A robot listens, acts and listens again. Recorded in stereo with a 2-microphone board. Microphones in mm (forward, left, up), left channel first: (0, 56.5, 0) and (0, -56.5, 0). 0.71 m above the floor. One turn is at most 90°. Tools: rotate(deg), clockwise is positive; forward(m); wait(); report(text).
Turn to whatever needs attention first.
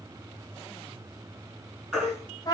rotate(30)
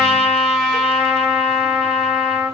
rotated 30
wait()
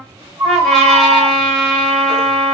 rotate(90)
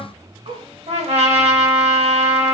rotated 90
rotate(50)
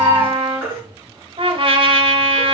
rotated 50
rotate(15)
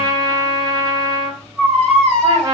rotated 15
report("Found it: a baby crying, straight ahead, over 4 m away.")